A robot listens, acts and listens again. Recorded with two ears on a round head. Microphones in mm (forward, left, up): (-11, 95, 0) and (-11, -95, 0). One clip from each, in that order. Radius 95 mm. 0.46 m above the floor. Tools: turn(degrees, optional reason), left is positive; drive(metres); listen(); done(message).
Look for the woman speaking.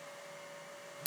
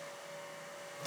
listen()
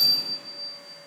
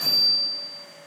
listen()
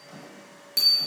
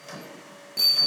done("I can't make out a woman speaking, only a bicycle bell and a microwave.")